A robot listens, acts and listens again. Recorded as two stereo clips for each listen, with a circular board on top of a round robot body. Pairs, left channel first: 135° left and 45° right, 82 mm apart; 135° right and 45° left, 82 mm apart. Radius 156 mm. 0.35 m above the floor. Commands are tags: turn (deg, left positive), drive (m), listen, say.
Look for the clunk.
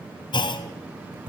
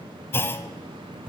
<turn deg="160"/>
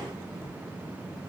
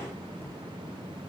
<say>I heard a clunk from this way, but can't make it out now.</say>